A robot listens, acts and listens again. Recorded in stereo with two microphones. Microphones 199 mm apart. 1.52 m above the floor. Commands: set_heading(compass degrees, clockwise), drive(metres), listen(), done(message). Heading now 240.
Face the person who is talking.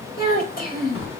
set_heading(195)
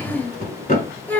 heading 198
set_heading(188)
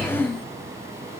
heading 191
done("Facing the child speaking.")